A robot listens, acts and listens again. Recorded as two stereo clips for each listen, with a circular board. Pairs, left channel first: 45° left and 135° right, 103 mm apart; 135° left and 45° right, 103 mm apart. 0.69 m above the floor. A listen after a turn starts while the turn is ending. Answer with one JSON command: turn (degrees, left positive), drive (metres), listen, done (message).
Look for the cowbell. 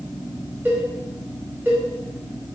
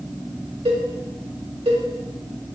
{"turn": -65}
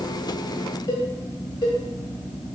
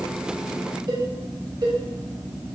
{"done": "Facing the cowbell, 1 to 2 m away."}